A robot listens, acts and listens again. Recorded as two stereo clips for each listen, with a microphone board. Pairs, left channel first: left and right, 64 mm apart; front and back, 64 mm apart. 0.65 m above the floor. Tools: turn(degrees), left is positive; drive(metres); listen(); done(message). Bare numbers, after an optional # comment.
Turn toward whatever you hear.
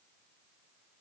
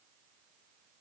listen()
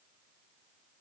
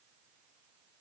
listen()
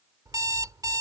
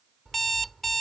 # The alarm clock: 85° right.
turn(-85)
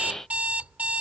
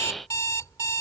# The alarm clock is now 25° right.
turn(-25)
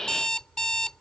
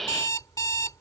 # The alarm clock is now 10° left.
turn(10)
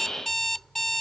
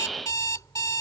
done("Found it: an alarm clock, straight ahead.")